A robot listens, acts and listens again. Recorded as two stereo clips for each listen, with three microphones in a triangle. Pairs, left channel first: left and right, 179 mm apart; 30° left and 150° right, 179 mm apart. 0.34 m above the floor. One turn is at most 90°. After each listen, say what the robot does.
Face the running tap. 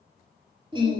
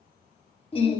Keep listening.
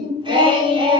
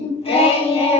Keep listening.
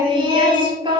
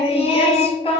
I can't make out a running tap to turn to.